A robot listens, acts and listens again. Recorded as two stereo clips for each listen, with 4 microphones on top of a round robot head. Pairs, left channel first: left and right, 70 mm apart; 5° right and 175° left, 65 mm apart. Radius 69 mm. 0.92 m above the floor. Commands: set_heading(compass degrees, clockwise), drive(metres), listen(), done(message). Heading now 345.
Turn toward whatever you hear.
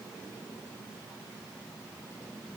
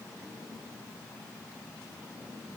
listen()
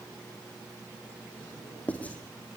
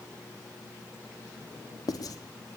set_heading(330)
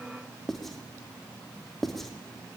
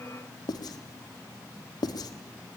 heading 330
done("Found it: writing, straight ahead, 2 to 4 m away.")